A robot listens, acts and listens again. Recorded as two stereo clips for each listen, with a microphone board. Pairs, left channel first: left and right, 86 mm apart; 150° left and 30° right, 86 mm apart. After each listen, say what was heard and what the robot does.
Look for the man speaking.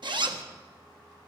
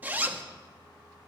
Keep listening.
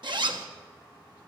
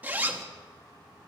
Keep listening.
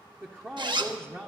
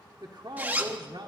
The man speaking: 25° right. Turn 25° right.
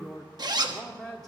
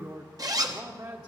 Found it: a man speaking, straight ahead, 1 to 2 m away.